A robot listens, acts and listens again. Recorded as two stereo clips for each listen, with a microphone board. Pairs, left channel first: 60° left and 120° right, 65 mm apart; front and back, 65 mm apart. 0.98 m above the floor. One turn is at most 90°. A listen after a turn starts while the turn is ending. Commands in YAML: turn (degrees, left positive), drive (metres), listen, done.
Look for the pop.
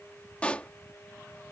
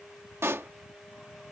turn: 90
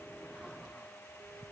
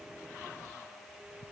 turn: 40
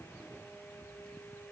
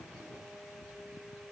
done: "I heard a pop from this way, but can't make it out now."